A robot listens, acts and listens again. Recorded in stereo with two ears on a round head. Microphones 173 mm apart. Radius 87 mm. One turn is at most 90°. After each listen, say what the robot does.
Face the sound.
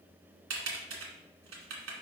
Turn 90° right.
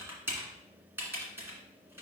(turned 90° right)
Turn 10° right.
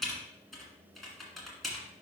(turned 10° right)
Facing the typing on a keyboard, 1 to 2 m away.